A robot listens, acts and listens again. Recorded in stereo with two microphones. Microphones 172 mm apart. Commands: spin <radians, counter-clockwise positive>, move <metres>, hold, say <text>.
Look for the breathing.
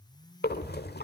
spin 1.57
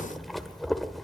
say Found it: breathing, straight ahead, 1 to 2 m away.